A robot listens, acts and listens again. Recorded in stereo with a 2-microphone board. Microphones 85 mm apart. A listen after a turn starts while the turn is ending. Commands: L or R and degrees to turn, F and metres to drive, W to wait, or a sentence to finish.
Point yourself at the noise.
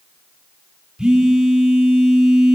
R30
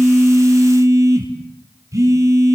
R140
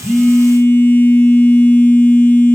L25
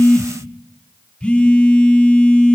L10
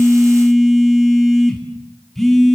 Facing the phone buzzing, 2 to 4 m away.